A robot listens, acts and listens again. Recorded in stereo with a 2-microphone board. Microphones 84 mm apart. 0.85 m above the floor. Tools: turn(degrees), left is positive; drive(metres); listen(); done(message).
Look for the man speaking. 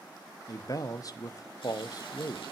turn(degrees=45)
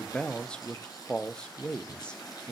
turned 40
turn(degrees=15)
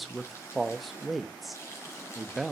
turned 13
done("Facing the man speaking, under 1 m away.")